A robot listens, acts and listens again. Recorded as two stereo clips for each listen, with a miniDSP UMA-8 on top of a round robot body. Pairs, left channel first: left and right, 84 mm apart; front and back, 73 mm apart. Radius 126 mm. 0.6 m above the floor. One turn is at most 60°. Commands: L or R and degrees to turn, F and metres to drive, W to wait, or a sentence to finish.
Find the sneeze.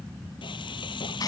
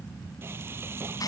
W
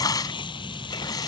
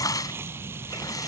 W
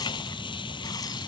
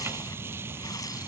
I can't make out a sneeze to turn to.